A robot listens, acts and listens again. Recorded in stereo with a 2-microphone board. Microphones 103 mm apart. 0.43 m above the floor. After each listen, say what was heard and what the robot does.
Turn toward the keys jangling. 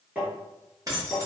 The keys jangling: about 40° right or 140° right. Turn 40° right.
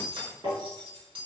So it is at 95° right. Turn 95° right.
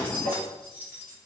The keys jangling is now 25° right. Turn 25° right.
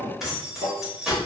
Found it: keys jangling, straight ahead.